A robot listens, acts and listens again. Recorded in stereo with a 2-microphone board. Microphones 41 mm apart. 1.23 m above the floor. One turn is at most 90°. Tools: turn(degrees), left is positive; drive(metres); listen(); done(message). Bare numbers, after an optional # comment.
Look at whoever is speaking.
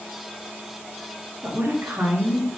# The woman speaking: about 75° right or 105° right.
turn(-75)
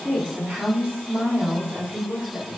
# So it is at 45° right.
turn(-45)
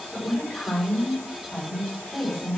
done("Facing the woman speaking, over 4 m away.")